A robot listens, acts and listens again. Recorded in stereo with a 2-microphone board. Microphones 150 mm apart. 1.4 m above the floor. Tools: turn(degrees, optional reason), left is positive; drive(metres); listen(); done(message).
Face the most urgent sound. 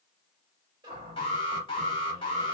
turn(degrees=40, reason="The alarm: about 40° left or 140° left.")
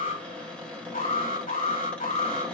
turn(degrees=100, reason="So it is at 100° left.")
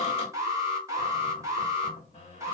turn(degrees=-20, reason="The alarm is now 20° right.")
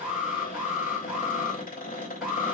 done("Facing the alarm.")